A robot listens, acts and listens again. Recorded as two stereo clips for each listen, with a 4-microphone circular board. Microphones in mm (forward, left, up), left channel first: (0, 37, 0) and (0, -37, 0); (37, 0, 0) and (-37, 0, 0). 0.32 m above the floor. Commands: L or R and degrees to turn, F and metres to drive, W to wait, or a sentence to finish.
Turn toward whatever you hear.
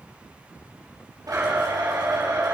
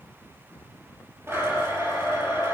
R130
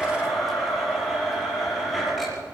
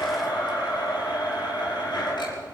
Facing the blender, over 4 m away.